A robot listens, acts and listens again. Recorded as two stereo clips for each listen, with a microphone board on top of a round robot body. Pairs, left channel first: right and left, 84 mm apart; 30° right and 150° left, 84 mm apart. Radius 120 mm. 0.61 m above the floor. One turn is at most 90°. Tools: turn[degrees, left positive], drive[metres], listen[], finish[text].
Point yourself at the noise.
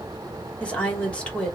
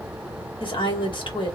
Thought: The woman speaking: 15° right.
Action: turn[-15]
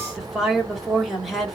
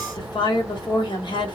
Action: finish[Facing the woman speaking.]